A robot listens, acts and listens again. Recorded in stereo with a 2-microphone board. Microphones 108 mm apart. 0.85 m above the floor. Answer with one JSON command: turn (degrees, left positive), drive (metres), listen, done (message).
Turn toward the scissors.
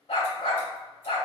{"listen": true}
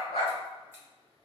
{"listen": true}
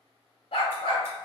{"done": "I can't make out scissors, only a dog barking."}